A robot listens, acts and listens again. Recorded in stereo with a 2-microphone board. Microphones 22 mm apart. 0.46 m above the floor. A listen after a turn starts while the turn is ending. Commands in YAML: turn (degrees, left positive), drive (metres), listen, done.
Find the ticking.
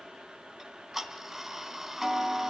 turn: -20
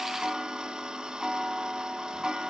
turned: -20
turn: -140
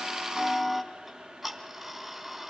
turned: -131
turn: -10
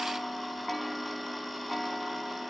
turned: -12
done: "Found it: ticking, straight ahead, 2 to 4 m away."